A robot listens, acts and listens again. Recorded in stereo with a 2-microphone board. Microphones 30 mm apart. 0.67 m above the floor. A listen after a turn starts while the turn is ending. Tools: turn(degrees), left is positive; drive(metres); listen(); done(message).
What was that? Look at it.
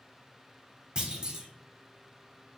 turn(degrees=-25)
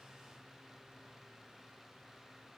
listen()
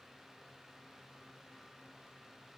done("I heard a clunk, but can't make it out now. It was about straight ahead or 130° right.")